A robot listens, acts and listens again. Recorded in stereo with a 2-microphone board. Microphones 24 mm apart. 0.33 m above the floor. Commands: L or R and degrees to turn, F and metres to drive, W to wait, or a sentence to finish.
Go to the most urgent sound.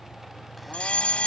L60
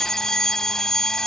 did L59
L30
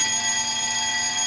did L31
F1.0
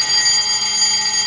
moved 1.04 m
F1.0
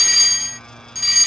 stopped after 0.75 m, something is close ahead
Arrived at the fire alarm, straight ahead.